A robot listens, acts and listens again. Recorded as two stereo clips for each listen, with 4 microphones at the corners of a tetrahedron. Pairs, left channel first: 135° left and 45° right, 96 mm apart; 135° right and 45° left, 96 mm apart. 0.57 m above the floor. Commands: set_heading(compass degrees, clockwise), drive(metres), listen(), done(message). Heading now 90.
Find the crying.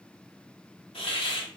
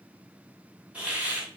listen()
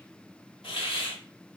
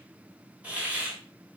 listen()
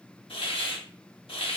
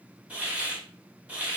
done("I can't make out crying to turn to.")